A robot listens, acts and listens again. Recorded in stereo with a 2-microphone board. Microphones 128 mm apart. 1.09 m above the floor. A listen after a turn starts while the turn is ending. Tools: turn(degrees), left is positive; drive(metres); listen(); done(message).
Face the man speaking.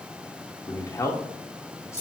turn(degrees=25)
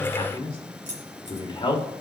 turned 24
turn(degrees=40)
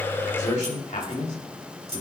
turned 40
turn(degrees=105)
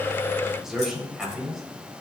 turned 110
done("Facing the man speaking.")